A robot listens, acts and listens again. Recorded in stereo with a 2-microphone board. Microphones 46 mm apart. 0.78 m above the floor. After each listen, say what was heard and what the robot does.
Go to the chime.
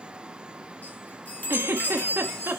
The chime: about 45° left or 135° left. Turn 45° left.
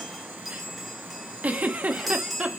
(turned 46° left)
Drive 1.0 m forward.
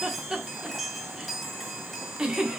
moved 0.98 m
Drive 1.0 m forward.
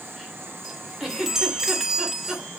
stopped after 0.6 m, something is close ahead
The chime is now 10° right. Turn 10° right.
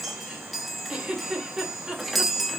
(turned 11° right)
Arrived at the chime, straight ahead.